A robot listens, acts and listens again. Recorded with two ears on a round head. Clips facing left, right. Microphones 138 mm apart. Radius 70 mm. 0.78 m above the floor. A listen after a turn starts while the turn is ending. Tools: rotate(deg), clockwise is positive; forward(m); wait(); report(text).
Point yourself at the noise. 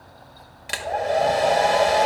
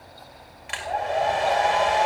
rotate(-40)
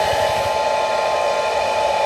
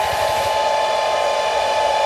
report("Found it: a hair dryer, straight ahead, 2 to 4 m away.")